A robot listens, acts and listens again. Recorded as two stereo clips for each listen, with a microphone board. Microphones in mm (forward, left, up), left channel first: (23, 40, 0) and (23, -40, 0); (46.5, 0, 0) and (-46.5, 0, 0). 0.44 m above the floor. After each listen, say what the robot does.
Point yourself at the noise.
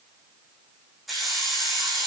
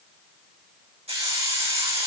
Turn 180° left.
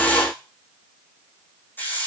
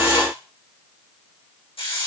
Turn 20° left.
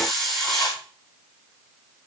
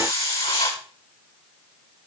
Facing the hiss, over 4 m away.